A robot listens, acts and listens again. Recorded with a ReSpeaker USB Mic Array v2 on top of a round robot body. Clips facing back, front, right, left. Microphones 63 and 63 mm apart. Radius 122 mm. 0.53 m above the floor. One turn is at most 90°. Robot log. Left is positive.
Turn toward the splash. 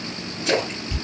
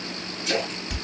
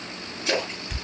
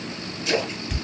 note: The splash: 150° right.
cmd yaw -90
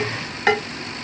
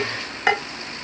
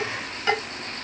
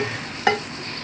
note: Nothing new. It was at 60° right.
cmd yaw -60
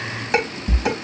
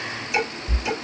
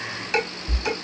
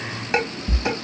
end: Facing where the splash came from. I can't hear it now.